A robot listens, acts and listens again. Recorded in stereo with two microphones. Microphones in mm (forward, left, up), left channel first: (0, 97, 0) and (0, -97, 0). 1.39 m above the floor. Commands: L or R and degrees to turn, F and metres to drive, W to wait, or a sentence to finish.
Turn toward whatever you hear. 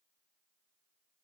W
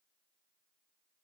W
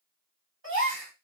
R90
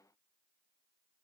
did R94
I heard a gasp from this way, but can't make it out now.